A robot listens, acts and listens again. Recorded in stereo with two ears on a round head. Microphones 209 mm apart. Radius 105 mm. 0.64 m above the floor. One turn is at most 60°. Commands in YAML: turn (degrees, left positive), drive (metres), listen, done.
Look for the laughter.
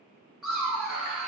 turn: -30
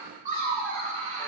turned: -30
turn: -60
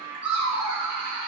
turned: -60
turn: -60
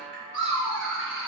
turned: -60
done: "Facing the laughter."